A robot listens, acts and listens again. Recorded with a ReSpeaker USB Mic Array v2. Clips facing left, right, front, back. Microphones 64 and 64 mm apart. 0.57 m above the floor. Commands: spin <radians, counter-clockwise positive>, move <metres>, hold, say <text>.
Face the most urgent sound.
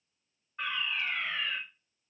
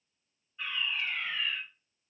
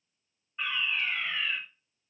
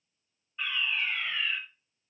spin 1.22
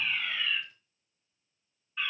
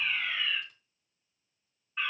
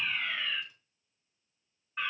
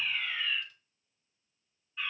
spin -0.52
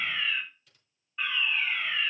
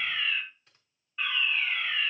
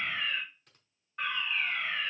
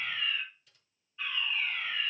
say Found it: a fire alarm, straight ahead.